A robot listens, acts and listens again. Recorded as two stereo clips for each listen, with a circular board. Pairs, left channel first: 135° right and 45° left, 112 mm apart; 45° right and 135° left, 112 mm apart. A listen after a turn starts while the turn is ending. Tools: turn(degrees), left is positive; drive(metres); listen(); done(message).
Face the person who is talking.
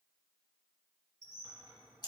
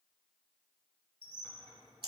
listen()
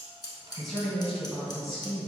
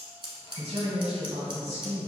turn(degrees=135)
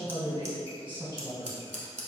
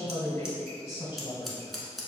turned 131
done("Found it: a man speaking, straight ahead, 1 to 2 m away.")